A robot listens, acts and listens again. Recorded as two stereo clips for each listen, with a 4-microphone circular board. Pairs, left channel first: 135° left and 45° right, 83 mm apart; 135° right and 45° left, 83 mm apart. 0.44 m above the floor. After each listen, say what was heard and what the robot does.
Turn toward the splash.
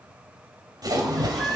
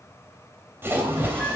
The splash: 15° right. Turn 15° right.
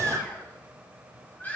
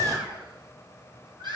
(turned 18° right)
I heard a splash from this way, but can't make it out now.